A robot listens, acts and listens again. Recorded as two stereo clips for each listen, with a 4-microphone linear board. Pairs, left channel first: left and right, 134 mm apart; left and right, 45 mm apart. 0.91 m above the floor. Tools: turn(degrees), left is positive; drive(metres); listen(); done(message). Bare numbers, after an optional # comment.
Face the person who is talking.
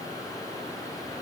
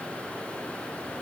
listen()
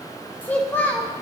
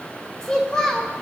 turn(30)
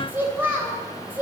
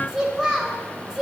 # So it is at 15° right.
turn(-15)
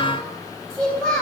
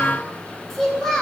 done("Found it: a child speaking, straight ahead.")